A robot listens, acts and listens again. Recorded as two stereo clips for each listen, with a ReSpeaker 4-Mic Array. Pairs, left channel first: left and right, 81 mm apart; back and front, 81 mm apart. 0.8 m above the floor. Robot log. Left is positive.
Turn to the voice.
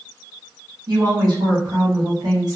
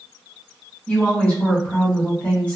note: The woman speaking: 110° right.
cmd yaw -110
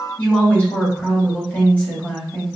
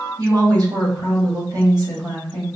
note: The woman speaking is now 25° left.
cmd yaw +25
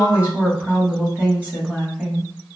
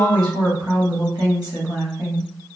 note: The woman speaking is now 25° right.
cmd yaw -25
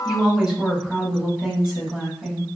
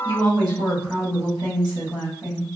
note: The woman speaking is now 10° right.
cmd yaw -10
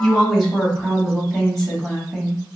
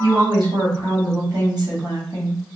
end: Facing the woman speaking, 1 to 2 m away.